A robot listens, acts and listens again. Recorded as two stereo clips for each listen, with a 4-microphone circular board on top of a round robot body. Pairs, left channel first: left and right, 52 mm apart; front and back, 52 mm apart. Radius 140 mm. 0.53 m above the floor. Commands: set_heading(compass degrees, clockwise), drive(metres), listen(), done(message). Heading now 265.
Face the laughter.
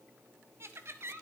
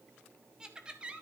set_heading(20)
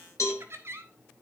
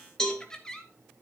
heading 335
set_heading(55)
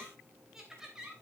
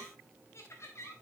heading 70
set_heading(85)
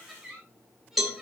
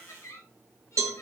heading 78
set_heading(88)
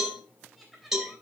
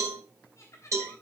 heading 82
done("Found it: laughter, straight ahead.")